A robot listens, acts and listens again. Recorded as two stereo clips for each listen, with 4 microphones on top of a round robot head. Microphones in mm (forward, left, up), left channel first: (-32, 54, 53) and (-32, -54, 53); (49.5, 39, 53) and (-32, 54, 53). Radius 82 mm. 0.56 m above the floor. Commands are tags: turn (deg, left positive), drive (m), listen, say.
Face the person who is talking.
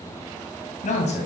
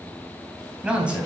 <turn deg="95"/>
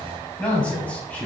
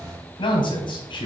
<turn deg="10"/>
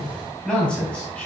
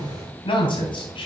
<turn deg="10"/>
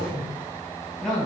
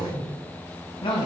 <say>Found it: a man speaking, straight ahead.</say>